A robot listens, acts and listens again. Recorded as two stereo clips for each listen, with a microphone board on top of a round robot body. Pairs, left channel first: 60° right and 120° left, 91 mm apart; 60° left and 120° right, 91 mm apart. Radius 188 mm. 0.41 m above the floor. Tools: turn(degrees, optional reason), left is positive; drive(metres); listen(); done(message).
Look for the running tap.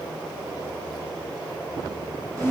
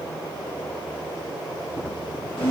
listen()
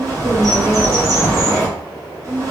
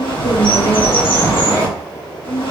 listen()
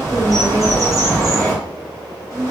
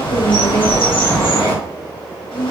done("I can't make out a running tap, only a bird.")